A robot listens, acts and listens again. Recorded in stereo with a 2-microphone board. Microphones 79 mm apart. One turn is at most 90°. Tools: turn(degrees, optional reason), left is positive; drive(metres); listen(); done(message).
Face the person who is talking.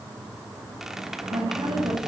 listen()
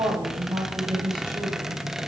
turn(degrees=-90)
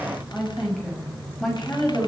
done("Facing the woman speaking, over 4 m away.")